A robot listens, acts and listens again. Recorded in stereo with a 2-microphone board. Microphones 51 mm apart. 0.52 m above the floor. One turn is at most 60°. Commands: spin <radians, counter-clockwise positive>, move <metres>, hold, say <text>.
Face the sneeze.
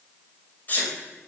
spin 0.61
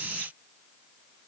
hold
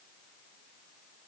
say I heard a sneeze, but can't make it out now. It was about straight ahead or 110° left.